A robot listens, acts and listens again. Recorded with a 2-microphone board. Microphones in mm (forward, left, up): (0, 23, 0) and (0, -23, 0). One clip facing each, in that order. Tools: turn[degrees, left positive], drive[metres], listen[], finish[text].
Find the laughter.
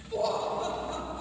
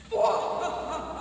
Thought: The laughter: about 40° right or 140° right.
Action: turn[-40]
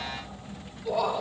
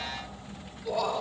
Thought: So it is at 10° left.
Action: turn[10]
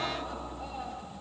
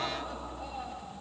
Action: finish[Facing the laughter.]